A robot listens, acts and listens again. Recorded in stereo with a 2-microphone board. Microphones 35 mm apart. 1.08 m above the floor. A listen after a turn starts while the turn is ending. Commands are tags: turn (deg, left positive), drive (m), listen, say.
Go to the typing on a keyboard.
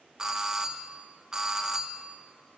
<listen/>
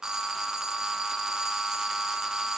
<listen/>
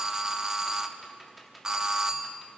<turn deg="30"/>
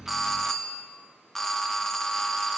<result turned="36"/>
<listen/>
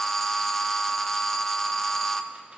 <listen/>
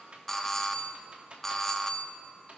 <turn deg="-35"/>
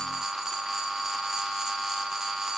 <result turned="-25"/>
<turn deg="-10"/>
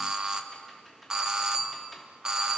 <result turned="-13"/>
<drive m="1.0"/>
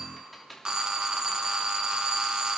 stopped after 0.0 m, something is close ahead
<say>Something is in my way. I am facing the typing on a keyboard but have not reached it.</say>